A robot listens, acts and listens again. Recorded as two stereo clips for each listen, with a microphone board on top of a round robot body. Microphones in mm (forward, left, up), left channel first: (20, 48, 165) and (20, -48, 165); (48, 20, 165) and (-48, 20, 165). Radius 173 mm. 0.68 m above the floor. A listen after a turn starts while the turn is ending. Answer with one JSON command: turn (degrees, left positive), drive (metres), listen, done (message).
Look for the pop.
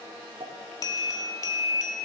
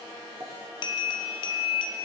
{"turn": -115}
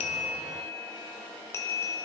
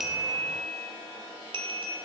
{"done": "Facing where the pop came from. I can't hear it now."}